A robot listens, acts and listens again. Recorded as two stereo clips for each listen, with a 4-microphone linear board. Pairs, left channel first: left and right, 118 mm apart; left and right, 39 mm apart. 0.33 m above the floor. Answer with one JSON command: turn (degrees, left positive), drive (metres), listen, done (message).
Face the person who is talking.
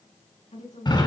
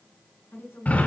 {"turn": 70}
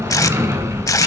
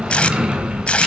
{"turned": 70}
{"listen": true}
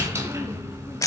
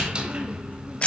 {"listen": true}
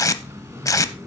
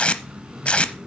{"done": "I heard a woman speaking, but can't make it out now. It was about straight ahead or 40° left."}